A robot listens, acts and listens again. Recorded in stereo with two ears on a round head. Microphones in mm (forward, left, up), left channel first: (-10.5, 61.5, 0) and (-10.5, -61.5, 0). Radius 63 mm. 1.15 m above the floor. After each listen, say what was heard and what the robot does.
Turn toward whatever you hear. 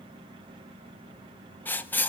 Turn 30° left.
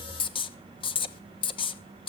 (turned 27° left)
So it is at 140° left. Turn 140° left.
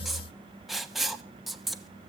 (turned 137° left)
Found it: writing, straight ahead, 1 to 2 m away.